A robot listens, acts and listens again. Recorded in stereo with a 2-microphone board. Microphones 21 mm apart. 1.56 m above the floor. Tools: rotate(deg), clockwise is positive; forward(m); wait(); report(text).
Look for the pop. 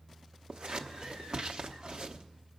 wait()
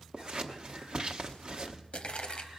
rotate(-65)
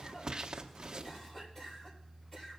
wait()
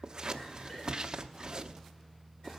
report("I heard a pop, but can't make it out now. It was about straight ahead or 50° left.")